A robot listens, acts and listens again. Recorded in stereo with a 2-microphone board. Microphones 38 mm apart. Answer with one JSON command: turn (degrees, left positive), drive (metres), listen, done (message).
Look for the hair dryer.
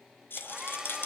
{"turn": -15}
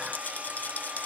{"turn": -150}
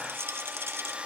{"turn": -30}
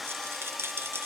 {"done": "Found it: a hair dryer, straight ahead."}